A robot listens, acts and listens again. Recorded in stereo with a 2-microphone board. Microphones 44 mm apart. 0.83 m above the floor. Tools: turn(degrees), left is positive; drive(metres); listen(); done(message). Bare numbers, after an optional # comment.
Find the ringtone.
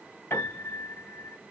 listen()
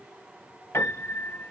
listen()
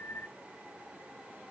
done("I can't make out a ringtone to turn to.")